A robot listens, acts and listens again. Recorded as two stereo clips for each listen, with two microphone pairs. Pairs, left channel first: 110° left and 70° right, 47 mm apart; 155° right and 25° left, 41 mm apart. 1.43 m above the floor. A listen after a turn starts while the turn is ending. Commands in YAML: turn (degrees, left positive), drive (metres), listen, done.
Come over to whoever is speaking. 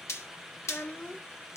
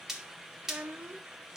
turn: 65
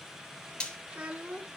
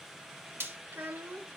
drive: 1.0
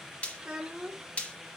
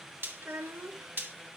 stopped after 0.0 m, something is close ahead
turn: 10
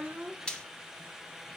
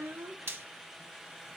done: "Blocked. The child speaking is further on, straight ahead."